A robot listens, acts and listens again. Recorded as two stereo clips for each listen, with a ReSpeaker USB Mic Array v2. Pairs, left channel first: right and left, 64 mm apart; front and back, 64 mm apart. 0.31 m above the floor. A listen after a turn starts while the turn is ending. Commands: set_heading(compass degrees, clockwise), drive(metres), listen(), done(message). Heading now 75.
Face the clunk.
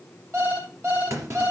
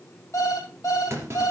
set_heading(305)
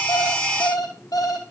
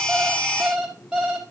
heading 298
done("Facing where the clunk came from. I can't hear it now.")